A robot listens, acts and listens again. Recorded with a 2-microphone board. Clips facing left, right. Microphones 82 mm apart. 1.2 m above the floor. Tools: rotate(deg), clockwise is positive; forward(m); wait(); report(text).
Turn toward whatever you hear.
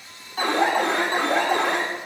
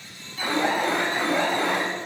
rotate(-60)
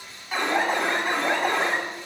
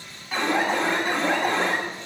report("Facing the alarm, 2 to 4 m away.")